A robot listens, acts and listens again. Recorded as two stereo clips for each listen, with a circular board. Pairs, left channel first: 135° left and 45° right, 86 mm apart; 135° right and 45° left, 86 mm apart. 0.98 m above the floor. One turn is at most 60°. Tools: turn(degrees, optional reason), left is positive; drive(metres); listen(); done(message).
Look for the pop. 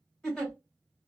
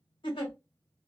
listen()
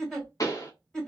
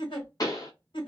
turn(degrees=60, reason="The pop: straight behind.")
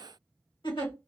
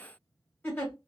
turn(degrees=60, reason="Nothing new. It was at 120° left.")
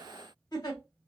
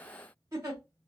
turn(degrees=60, reason="Nothing new. It was at 60° left.")
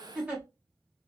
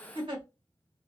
done("Facing where the pop came from. I can't hear it now.")